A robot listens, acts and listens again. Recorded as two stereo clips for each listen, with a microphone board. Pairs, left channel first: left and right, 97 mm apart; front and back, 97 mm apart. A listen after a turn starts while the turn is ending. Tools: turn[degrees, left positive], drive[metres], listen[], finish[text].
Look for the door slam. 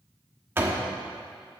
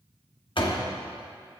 Thought: The door slam: 25° right.
Action: turn[-25]
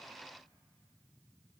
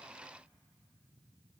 Action: finish[I heard a door slam from this way, but can't make it out now.]